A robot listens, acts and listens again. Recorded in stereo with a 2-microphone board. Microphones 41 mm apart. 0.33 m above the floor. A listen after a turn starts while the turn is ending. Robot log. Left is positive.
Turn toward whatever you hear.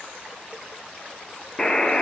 note: The buzzer: about 20° left or 160° left.
cmd yaw +20
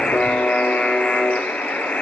note: So it is at 140° left.
cmd yaw +140
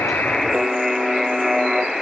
end: Facing the buzzer.